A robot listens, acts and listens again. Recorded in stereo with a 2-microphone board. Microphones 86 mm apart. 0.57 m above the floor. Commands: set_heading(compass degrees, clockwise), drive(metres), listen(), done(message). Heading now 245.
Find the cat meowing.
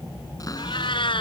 set_heading(155)
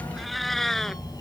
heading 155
done("Facing the cat meowing.")